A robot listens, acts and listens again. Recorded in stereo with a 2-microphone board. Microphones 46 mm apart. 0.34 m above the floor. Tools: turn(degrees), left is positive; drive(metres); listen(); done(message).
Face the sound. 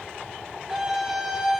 turn(degrees=-30)
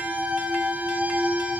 turn(degrees=-135)
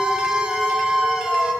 turn(degrees=-20)
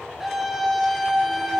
done("Facing the scream.")